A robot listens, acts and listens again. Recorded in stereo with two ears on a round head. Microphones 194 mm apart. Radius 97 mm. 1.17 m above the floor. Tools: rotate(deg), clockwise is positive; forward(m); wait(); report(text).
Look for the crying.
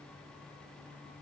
wait()
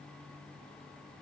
wait()
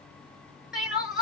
rotate(-30)
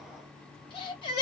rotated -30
rotate(-150)
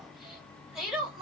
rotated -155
report("Facing the crying, 1 to 2 m away.")